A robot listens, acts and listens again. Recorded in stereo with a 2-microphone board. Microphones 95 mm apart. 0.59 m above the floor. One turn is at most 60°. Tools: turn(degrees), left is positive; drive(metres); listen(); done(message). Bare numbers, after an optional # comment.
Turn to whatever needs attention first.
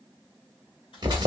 listen()
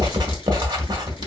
listen()
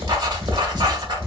done("I can't make out anything urgent to turn to.")